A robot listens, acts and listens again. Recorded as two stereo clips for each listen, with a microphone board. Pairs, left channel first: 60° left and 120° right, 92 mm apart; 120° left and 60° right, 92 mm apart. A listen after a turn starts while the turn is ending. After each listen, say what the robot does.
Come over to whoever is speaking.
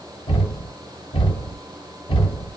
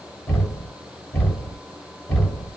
Keep listening.
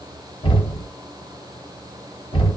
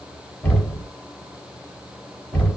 Keep listening.
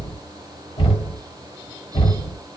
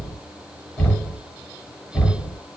I can't make out anyone speaking to turn to.